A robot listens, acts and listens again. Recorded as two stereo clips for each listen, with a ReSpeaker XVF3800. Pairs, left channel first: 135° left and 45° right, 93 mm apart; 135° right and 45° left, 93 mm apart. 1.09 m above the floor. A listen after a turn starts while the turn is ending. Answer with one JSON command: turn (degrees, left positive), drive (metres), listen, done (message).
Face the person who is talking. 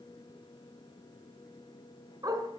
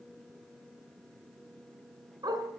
{"listen": true}
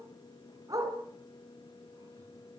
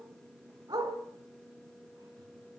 {"listen": true}
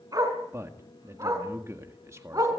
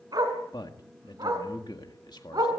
{"turn": -100}
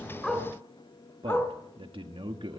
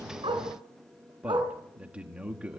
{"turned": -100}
{"turn": -35}
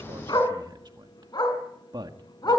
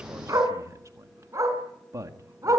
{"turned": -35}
{"turn": -10}
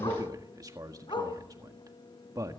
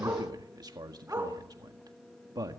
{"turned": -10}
{"done": "Facing the man speaking."}